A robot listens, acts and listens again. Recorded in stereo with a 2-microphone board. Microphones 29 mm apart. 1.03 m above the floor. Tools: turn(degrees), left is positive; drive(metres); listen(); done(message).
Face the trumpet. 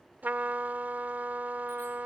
turn(degrees=-90)
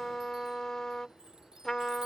turn(degrees=15)
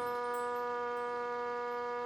done("Found it: a trumpet, straight ahead.")